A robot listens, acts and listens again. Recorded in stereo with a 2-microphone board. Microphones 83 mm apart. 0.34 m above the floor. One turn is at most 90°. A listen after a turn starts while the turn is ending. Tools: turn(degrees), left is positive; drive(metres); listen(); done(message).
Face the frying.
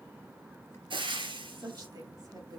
turn(degrees=-90)
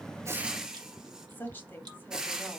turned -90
done("Found it: frying, straight ahead.")